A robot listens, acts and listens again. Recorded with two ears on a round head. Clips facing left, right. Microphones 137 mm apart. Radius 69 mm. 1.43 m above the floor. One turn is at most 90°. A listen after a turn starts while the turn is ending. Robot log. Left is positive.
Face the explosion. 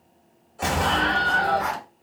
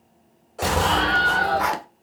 note: The explosion: about 30° right or 150° right.
cmd yaw -30
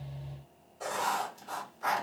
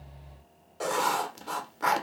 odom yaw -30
cmd idle
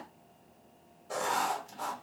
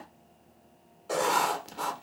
end: I heard an explosion, but can't make it out now. It was about straight ahead or 120° right.